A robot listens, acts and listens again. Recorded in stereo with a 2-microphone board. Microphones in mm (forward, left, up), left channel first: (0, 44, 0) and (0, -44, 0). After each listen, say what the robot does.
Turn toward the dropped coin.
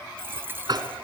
Turn 25° right.
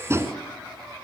Keep listening.
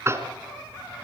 I heard a dropped coin, but can't make it out now. It was about straight ahead or 130° right.